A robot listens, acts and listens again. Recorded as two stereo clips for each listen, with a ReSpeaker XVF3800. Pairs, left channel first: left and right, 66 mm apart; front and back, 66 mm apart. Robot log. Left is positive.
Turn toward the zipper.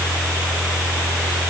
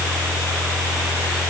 cmd idle
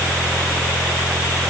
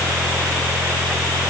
cmd idle
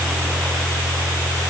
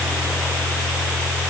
end: I can't make out a zipper to turn to.